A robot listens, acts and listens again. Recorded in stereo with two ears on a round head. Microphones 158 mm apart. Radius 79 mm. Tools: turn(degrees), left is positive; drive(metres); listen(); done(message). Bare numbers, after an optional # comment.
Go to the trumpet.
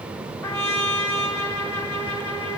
turn(30)
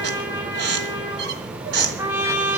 # So it is at 15° right.
turn(-15)
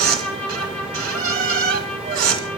drive(1.0)
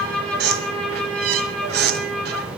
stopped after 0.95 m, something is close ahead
done("Blocked. The trumpet is further on, straight ahead.")